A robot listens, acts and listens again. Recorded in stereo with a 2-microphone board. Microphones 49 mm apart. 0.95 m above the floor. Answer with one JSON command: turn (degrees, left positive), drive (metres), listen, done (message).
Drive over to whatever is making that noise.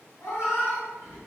{"turn": 90}
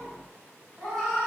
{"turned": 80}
{"drive": 1.0}
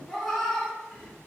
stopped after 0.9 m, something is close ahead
{"done": "I am next to the cat meowing."}